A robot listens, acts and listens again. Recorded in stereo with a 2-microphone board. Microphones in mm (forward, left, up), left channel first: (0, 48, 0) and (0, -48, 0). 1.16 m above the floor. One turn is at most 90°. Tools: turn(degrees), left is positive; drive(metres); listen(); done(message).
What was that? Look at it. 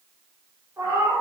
turn(degrees=-30)
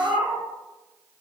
turn(degrees=-15)
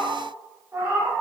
turn(degrees=-25)
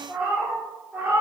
turn(degrees=-25)
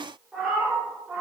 turn(degrees=-10)
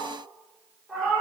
done("Found it: a cat meowing, straight ahead, 1 to 2 m away.")